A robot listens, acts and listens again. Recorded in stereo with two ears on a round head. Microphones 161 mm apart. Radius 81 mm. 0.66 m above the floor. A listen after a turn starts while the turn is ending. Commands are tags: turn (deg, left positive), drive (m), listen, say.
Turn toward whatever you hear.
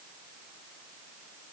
<listen/>
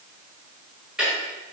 <turn deg="-30"/>
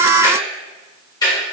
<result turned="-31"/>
<turn deg="20"/>
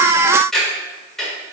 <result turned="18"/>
<say>Facing the ticking.</say>